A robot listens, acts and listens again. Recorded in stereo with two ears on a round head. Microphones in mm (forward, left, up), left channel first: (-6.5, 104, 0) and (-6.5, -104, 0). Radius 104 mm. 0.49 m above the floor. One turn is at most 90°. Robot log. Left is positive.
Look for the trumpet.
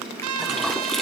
note: The trumpet: about 70° right or 110° right.
cmd yaw -70
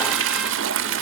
cmd idle
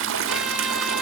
cmd idle
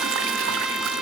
end: Facing the trumpet.